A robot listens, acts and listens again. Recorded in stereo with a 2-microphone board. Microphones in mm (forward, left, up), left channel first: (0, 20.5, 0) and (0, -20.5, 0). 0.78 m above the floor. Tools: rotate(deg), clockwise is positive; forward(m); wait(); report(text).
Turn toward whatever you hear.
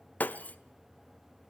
rotate(-45)
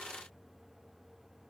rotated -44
wait()
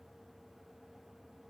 report("I heard breaking glass, but can't make it out now. It was about straight ahead or 90° left.")